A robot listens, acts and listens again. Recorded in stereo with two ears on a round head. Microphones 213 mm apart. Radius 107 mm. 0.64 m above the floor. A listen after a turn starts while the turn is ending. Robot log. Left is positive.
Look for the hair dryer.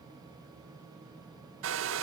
note: The hair dryer: about 65° right or 115° right.
cmd yaw -65
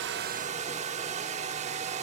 note: So it is at 35° right.
cmd yaw -35
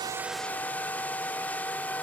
note: The hair dryer is now 10° left.
cmd yaw +10
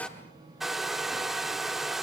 end: Found it: a hair dryer, straight ahead.